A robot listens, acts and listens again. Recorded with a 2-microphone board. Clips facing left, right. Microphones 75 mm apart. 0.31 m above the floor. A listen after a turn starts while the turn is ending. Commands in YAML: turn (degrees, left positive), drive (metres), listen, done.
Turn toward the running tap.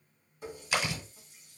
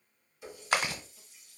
turn: 45
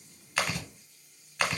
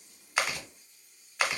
done: "Found it: a running tap, straight ahead."